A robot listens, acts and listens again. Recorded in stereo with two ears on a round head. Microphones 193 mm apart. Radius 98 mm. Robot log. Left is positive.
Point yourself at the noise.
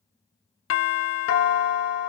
note: The doorbell: about 60° left or 120° left.
cmd yaw +60
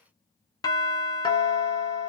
note: So it is at 20° left.
cmd yaw +20
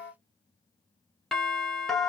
end: Found it: a doorbell, straight ahead, under 1 m away.